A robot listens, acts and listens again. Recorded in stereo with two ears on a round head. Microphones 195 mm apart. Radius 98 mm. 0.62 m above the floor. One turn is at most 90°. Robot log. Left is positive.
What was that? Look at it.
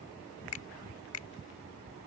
note: The finger snap: about 70° left or 110° left.
cmd yaw +70
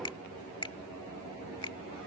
note: So it is at 25° left.
cmd yaw +25
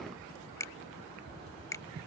note: The finger snap is now 15° left.
cmd yaw +15
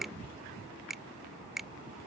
end: Facing the finger snap.